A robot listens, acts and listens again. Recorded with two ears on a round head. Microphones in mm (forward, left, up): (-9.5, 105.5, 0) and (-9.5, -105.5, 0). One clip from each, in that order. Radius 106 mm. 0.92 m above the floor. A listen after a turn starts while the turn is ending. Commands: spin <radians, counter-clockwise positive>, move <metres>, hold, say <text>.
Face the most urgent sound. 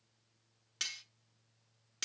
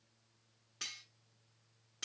hold
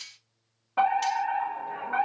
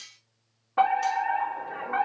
spin 0.52
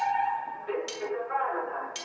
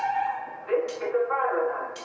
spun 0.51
say Found it: a fire alarm, straight ahead.